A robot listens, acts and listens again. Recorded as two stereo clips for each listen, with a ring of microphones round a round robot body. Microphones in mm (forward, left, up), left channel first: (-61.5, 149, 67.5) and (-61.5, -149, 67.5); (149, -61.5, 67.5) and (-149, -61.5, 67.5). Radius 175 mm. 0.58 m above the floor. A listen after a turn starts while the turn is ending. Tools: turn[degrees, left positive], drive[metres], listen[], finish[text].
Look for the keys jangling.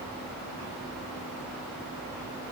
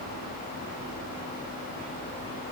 Action: listen[]
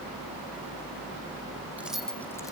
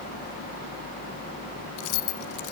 Action: finish[Facing the keys jangling.]